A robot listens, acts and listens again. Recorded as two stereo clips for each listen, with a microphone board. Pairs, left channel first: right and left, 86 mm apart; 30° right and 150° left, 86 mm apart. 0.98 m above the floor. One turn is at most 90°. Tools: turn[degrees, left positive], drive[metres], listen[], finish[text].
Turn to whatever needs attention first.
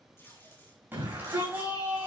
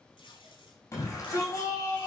Thought: The shout: 25° left.
Action: turn[25]
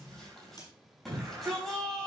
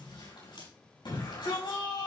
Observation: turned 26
Action: finish[Found it: a shout, straight ahead.]